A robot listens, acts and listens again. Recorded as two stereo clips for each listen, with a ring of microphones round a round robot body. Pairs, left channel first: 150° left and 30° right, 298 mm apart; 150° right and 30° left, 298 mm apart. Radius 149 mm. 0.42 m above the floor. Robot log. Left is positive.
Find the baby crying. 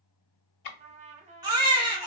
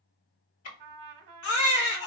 note: The baby crying: 105° right.
cmd yaw -105
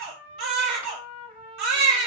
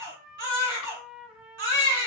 note: The baby crying is now 25° right.
cmd yaw -25
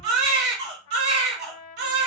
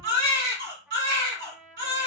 note: The baby crying is now 25° right.
cmd yaw -25
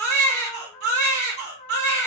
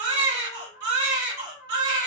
note: The baby crying is now 10° left.
cmd yaw +10
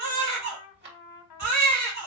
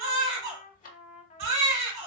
end: Found it: a baby crying, straight ahead.